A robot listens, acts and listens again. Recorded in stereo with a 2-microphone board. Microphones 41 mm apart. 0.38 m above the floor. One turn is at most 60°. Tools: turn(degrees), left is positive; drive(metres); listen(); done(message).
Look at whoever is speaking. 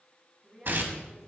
turn(degrees=-30)
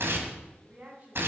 turn(degrees=-60)
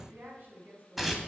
turn(degrees=-50)
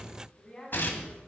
turn(degrees=15)
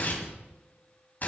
listen()
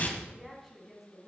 done("Found it: a woman speaking, straight ahead.")